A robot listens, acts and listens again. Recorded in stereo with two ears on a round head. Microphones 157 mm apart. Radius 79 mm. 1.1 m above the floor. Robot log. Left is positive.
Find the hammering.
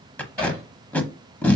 cmd yaw +30
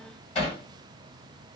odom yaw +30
note: So it is at 145° left.
cmd yaw +145
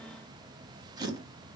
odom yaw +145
cmd idle
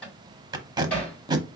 end: Found it: hammering, straight ahead.